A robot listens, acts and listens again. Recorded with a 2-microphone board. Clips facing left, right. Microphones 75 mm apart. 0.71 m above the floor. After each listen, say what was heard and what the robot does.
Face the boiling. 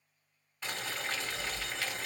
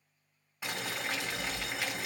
Turn 30° right.
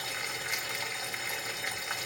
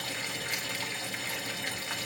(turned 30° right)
So it is at 20° left. Turn 20° left.
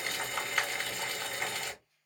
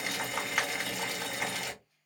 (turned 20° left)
The boiling is now 10° right. Turn 10° right.
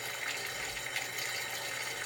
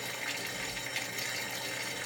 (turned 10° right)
Found it: boiling, straight ahead.